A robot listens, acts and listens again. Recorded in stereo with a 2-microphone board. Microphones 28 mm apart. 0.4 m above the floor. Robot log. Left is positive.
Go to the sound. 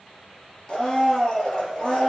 note: The blender: about 25° left or 155° left.
cmd yaw +25
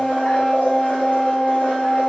note: So it is at 130° left.
cmd yaw +130
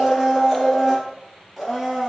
cmd fwd 1.0
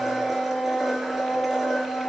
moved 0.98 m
cmd fwd 1.0
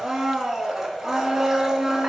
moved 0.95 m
note: The blender is now 15° right.
cmd yaw -15
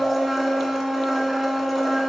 cmd fwd 1.0
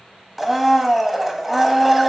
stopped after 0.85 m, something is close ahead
end: Arrived at the blender, straight ahead.